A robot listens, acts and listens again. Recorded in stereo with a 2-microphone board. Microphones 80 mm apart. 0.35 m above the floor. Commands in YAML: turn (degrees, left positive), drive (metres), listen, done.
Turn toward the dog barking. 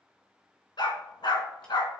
turn: 70
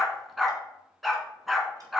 done: "Found it: a dog barking, straight ahead."